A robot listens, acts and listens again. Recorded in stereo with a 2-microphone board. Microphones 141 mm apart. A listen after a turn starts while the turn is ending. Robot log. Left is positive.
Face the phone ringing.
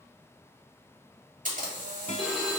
cmd yaw +30
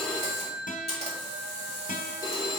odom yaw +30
note: So it is at 150° left.
cmd yaw +150
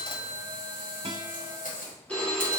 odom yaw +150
note: The phone ringing is now 10° left.
cmd yaw +10
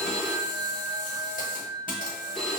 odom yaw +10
end: Found it: a phone ringing, straight ahead.